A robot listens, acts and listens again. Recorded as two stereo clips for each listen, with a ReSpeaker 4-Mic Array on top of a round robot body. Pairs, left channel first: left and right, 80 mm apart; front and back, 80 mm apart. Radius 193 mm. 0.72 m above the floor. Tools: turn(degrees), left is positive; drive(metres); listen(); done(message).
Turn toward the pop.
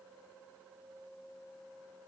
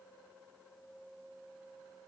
listen()
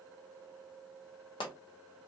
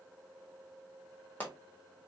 turn(degrees=70)
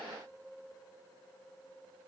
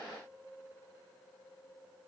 done("I heard a pop from this way, but can't make it out now.")